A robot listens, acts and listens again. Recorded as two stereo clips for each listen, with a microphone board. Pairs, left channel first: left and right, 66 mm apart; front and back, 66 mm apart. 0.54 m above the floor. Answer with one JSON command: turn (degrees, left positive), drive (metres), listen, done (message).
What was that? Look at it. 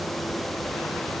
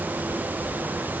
{"listen": true}
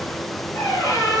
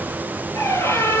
{"turn": 45}
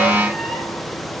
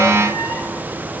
{"listen": true}
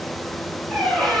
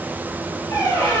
{"done": "Found it: a squeak, straight ahead."}